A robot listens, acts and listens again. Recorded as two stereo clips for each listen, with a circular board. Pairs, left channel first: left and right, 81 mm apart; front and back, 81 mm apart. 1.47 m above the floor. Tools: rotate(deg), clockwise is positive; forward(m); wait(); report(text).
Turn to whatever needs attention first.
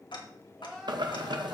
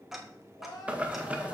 report("Found it: crying, straight ahead.")